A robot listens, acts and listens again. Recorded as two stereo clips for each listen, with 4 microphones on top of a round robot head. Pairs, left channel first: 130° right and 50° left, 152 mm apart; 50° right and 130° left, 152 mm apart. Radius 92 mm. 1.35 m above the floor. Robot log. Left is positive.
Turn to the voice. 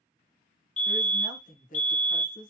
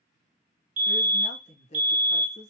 note: The woman speaking: 95° right.
cmd yaw -95
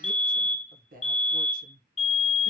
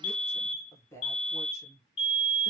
note: The woman speaking is now 20° left.
cmd yaw +20
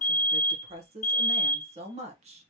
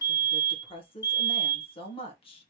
end: Facing the woman speaking, 1 to 2 m away.